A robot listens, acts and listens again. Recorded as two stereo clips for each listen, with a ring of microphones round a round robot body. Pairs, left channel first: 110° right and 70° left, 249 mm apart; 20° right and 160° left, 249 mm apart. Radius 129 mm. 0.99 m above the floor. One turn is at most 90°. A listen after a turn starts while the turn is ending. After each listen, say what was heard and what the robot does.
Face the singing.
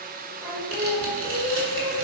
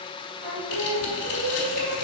The singing: 150° left. Turn 90° left.
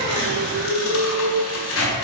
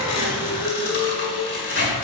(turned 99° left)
The singing is now 50° left. Turn 50° left.
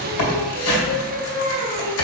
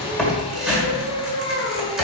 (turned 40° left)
The singing is now 10° left. Turn 10° left.
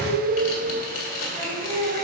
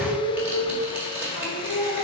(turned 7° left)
Found it: singing, straight ahead, 2 to 4 m away.